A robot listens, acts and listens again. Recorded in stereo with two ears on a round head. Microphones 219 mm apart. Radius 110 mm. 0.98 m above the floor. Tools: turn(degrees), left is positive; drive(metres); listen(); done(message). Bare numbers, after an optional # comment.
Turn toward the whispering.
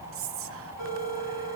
# The whispering: about 60° right or 120° right.
turn(-60)
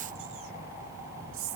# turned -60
# So it is at 60° right.
turn(-60)
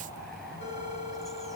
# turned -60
listen()
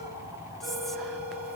listen()
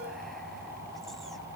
done("Facing where the whispering came from. I can't hear it now.")